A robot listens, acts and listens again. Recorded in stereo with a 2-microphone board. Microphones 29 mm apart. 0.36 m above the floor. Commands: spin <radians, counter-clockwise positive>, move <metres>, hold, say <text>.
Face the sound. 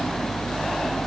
hold
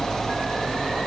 hold
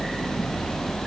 say I can't make out anything.